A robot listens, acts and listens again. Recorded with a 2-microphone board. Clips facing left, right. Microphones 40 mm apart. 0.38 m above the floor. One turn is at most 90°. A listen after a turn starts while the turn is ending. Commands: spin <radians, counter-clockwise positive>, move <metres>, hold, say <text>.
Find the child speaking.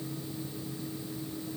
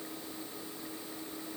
hold
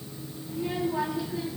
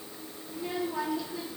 spin 0.26
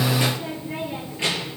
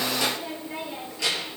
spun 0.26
spin 0.61
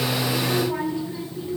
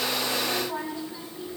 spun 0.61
spin 1.57
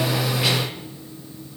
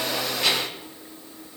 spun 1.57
say Facing the child speaking.